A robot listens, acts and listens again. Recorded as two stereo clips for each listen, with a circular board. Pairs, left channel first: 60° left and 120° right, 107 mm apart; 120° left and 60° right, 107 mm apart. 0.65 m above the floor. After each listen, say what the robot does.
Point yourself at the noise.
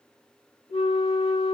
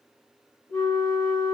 Turn 50° left.
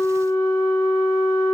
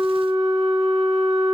Found it: a flute, straight ahead, 1 to 2 m away.